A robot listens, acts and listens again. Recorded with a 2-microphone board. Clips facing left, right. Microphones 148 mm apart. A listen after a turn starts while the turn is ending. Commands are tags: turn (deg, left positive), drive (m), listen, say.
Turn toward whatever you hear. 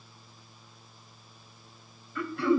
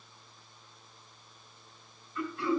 <turn deg="70"/>
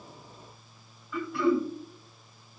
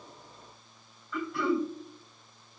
<say>Facing the throat clearing, 2 to 4 m away.</say>